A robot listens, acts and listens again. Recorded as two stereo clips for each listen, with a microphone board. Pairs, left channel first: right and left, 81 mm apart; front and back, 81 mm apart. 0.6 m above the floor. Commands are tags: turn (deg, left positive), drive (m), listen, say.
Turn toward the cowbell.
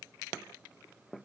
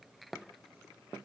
<listen/>
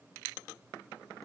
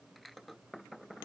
<listen/>
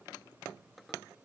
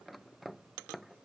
<say>I can't make out a cowbell to turn to.</say>